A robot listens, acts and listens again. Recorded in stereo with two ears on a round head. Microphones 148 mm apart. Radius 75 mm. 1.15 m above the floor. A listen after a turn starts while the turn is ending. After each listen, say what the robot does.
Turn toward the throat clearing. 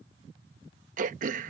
Turn 50° right.
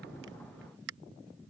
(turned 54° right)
Turn 75° right.
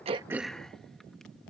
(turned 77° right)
Keep listening.
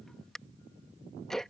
Facing the throat clearing.